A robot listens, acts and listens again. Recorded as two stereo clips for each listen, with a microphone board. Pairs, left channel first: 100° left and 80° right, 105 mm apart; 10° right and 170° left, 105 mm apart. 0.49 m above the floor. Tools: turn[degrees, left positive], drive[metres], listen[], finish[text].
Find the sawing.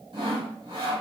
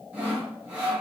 Thought: The sawing: 115° right.
Action: turn[-115]
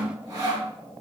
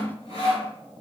Thought: The sawing is now 25° right.
Action: turn[-25]
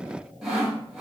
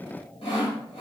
Action: finish[Facing the sawing.]